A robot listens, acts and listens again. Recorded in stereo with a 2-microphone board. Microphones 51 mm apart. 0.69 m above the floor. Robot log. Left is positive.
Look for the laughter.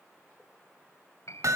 cmd idle
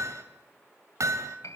cmd idle
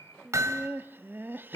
note: The laughter: about 40° right or 140° right.
cmd yaw -40
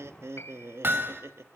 note: So it is at 90° right.
cmd yaw -90
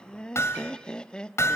note: The laughter is now 20° left.
cmd yaw +20
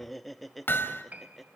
end: Found it: laughter, straight ahead.